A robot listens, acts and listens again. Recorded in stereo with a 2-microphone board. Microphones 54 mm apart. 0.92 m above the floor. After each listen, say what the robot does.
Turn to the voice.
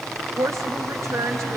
Turn 75° right.
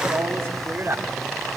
Turn 40° right.
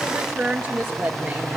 Turn 15° right.
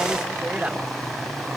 Turn 15° right.
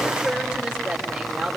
Facing the woman speaking, 2 to 4 m away.